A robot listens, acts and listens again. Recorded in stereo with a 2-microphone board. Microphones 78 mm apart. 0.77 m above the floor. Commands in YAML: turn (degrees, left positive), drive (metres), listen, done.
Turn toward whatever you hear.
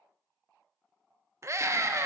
turn: -35
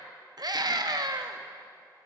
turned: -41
turn: -90
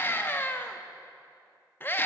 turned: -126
turn: 35
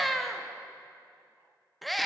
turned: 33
done: "Facing the scream, under 1 m away."